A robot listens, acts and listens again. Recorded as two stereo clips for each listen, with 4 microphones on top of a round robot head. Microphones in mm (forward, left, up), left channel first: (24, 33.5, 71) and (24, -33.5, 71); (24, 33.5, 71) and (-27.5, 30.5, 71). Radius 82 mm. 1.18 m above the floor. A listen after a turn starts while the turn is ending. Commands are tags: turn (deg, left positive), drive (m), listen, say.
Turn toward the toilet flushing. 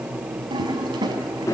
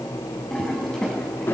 <turn deg="-75"/>
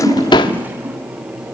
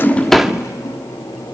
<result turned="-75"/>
<listen/>
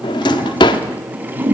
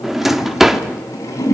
<turn deg="-25"/>
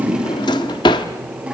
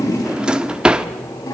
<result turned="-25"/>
<listen/>
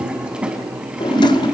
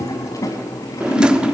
<turn deg="-15"/>
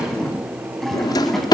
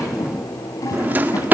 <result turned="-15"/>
<say>Facing the toilet flushing.</say>